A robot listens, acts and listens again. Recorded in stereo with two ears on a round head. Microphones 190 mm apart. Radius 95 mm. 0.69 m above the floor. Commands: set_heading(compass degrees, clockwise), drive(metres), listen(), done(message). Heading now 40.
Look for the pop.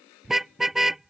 listen()
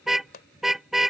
set_heading(355)
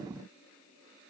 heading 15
listen()
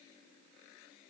done("I heard a pop, but can't make it out now. It was about 20° left or 110° left.")